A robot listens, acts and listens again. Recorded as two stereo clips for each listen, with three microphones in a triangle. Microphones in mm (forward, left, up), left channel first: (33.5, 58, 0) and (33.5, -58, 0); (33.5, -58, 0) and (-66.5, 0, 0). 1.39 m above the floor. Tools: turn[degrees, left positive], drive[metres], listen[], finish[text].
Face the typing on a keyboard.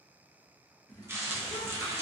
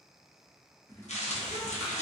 Thought: The typing on a keyboard: 35° left.
Action: turn[35]
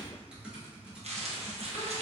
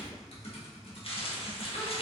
Thought: The typing on a keyboard is now 10° right.
Action: turn[-10]
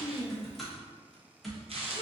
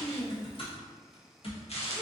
Action: finish[Facing the typing on a keyboard, 1 to 2 m away.]